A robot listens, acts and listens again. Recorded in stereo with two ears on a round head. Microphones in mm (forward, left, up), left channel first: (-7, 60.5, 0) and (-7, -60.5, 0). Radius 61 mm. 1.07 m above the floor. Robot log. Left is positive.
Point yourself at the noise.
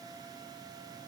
cmd idle
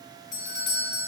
note: The doorbell: about 65° left or 115° left.
cmd yaw +65
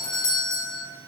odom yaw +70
note: So it is at 25° left.
cmd yaw +25
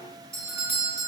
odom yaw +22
end: Found it: a doorbell, straight ahead, 1 to 2 m away.